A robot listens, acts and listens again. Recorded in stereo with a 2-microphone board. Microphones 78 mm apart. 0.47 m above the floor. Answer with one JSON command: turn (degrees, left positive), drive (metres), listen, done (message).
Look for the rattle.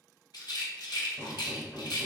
{"turn": 70}
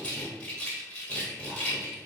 {"turn": 20}
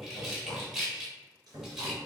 {"done": "Facing the rattle, under 1 m away."}